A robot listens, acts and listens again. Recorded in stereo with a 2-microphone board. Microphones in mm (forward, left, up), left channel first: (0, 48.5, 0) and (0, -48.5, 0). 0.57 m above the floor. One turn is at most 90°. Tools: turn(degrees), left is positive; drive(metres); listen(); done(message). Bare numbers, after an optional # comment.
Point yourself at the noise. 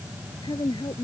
# The woman speaking: about 50° left or 130° left.
turn(50)
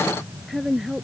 done("Facing the woman speaking.")